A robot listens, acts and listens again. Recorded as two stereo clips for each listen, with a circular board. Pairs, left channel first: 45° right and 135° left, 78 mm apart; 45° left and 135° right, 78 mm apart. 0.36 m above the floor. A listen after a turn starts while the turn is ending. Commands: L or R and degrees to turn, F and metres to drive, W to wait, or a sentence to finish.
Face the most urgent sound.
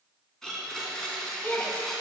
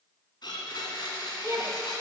R100
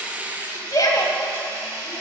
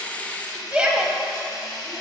R60
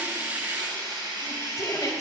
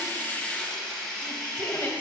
R15
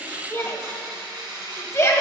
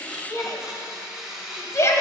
Facing the shout, 1 to 2 m away.